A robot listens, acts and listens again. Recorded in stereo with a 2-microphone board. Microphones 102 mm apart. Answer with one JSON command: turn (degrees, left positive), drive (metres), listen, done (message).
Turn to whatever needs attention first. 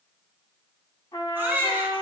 {"turn": -20}
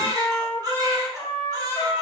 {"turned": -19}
{"turn": -140}
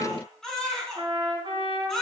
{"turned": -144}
{"done": "Found it: a baby crying, straight ahead, 2 to 4 m away."}